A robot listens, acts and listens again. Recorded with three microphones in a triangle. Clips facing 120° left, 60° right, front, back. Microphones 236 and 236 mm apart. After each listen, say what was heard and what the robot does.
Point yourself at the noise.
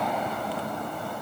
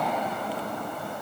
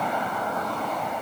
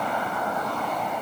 Keep listening.
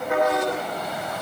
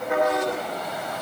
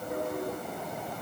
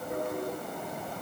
Keep listening.
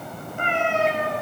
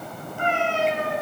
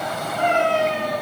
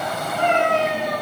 The cat meowing: 110° left. Turn 110° left.
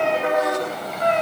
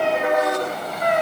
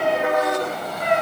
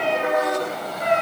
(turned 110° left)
The cat meowing is now 15° left. Turn 15° left.
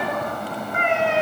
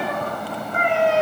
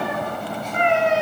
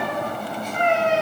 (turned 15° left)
The cat meowing is now 15° right. Turn 15° right.
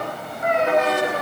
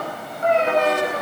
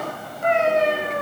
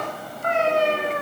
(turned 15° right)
Found it: a cat meowing, straight ahead.